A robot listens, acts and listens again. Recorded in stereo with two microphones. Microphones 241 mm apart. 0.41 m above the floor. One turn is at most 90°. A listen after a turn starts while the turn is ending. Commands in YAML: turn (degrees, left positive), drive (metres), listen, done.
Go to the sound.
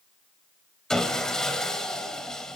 turn: 30
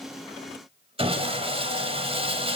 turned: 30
turn: -30
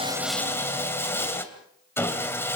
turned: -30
turn: 10
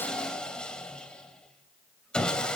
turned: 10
drive: 1.0
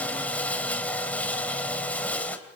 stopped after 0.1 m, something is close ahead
turn: 10
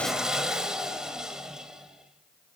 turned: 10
done: "Something is in my way. I am facing the sawing but have not reached it."